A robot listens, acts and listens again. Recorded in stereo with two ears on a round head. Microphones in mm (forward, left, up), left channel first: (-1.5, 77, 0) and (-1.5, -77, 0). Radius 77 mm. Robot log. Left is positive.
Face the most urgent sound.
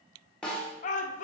note: The shout: about 45° left or 135° left.
cmd yaw +45
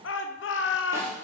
note: So it is at 90° left.
cmd yaw +90
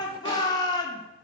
note: The shout is now 25° left.
cmd yaw +25
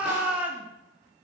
note: The shout is now 10° right.
cmd yaw -10
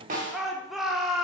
end: Found it: a shout, straight ahead.